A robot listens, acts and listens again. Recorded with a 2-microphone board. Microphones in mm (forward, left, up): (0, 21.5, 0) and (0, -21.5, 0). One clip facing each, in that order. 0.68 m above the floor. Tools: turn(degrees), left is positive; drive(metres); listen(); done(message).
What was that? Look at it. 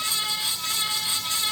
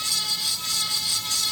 listen()
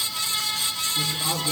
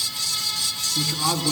turn(degrees=-70)
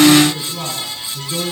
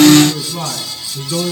turn(degrees=-30)
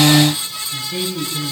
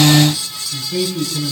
done("Facing the man speaking.")